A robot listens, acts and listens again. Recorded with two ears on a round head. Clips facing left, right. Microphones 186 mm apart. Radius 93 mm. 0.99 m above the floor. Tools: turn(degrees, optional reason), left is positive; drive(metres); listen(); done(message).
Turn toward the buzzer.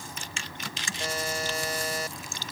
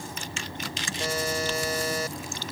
turn(degrees=-90)
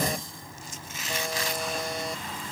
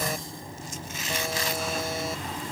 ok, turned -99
turn(degrees=10, reason="Nothing new. It was at 10° left.")
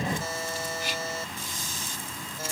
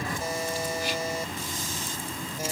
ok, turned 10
turn(degrees=-15, reason="The buzzer is now 15° right.")
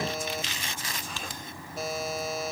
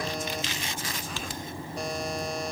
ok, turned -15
done("Facing the buzzer.")